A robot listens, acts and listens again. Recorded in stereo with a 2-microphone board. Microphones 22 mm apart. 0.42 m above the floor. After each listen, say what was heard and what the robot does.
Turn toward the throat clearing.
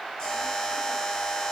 Keep listening.
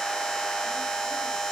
Keep listening.
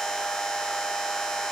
I can't make out throat clearing, only a buzzer.